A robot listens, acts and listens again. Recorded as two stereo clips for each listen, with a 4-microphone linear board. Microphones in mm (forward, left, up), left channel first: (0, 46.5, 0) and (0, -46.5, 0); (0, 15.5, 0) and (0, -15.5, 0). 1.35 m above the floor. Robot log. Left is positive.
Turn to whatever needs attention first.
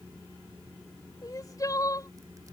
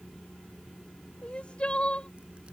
note: The crying: about 40° left or 140° left.
cmd yaw +40
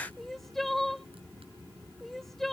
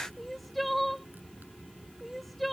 end: Found it: crying, straight ahead.